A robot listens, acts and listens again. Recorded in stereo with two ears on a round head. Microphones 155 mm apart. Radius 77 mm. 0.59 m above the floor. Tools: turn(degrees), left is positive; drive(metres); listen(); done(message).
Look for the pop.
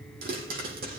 turn(degrees=-55)
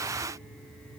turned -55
listen()
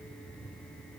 done("I heard a pop, but can't make it out now. It was about straight ahead or 70° right.")